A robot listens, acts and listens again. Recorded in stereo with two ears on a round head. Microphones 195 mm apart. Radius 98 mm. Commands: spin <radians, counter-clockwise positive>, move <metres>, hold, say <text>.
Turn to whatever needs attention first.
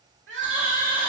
spin -1.05
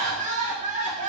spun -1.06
spin -0.70
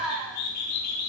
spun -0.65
say Facing the crying.